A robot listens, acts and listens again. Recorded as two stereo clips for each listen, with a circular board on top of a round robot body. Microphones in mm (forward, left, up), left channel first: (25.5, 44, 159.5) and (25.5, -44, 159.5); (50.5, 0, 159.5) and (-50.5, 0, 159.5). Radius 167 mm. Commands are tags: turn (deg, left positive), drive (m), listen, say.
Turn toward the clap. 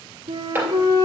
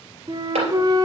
<turn deg="-160"/>
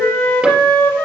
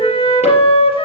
<listen/>
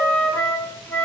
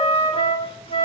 <listen/>
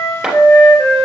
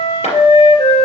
<turn deg="-10"/>
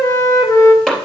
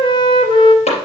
<say>Facing the clap, 2 to 4 m away.</say>